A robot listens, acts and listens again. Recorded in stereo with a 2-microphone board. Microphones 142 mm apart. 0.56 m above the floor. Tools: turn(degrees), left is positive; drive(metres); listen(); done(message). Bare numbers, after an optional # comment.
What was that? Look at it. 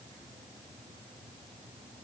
listen()
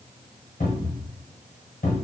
turn(90)
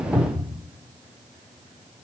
# So it is at 15° left.
turn(15)
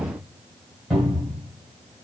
done("Found it: a cupboard door, straight ahead, 1 to 2 m away.")